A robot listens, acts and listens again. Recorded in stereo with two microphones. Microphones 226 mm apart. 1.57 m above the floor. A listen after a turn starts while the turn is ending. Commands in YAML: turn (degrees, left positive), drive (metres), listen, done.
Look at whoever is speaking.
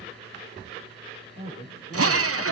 turn: 65
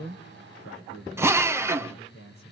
turn: 65
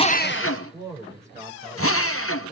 turn: -10
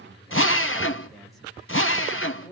done: "Facing the man speaking, over 4 m away."